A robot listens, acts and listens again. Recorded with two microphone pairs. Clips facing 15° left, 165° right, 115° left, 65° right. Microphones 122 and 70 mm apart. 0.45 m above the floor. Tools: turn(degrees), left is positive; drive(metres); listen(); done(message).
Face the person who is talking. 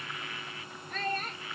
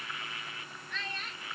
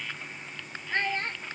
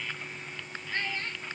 turn(degrees=60)
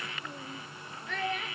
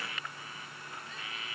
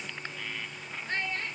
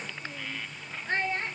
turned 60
done("Facing the child speaking.")